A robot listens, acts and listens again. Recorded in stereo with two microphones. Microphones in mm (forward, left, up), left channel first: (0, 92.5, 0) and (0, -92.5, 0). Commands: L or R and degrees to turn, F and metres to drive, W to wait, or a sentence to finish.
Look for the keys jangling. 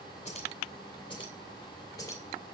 L15
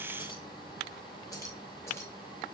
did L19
L20
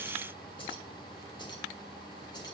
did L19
W
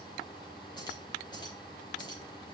W
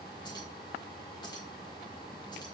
I heard keys jangling, but can't make it out now. It was about straight ahead or 145° left.